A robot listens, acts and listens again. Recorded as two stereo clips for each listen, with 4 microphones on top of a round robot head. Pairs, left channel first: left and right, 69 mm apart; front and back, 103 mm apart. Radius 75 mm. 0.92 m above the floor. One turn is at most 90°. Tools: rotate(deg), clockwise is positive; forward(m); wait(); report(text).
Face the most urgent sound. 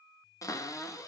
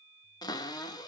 wait()
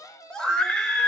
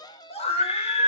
rotate(-10)
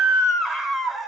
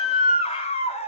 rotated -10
report("Found it: a scream, straight ahead.")